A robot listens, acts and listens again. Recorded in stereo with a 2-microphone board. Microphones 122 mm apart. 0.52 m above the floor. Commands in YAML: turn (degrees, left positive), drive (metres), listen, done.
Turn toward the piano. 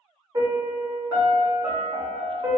turn: -30
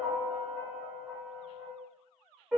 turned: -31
done: "Found it: a piano, straight ahead, 1 to 2 m away."